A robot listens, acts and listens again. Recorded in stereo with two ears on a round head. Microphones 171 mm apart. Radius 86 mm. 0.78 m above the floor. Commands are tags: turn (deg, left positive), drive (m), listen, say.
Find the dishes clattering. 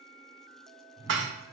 <turn deg="-70"/>
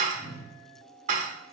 <turn deg="-40"/>
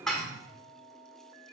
<say>Found it: dishes clattering, straight ahead.</say>